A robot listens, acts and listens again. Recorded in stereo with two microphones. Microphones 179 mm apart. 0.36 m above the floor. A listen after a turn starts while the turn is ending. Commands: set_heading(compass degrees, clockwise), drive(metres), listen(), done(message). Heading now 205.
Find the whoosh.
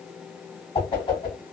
set_heading(180)
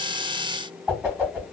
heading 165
set_heading(175)
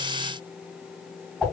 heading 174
done("Facing the whoosh, 1 to 2 m away.")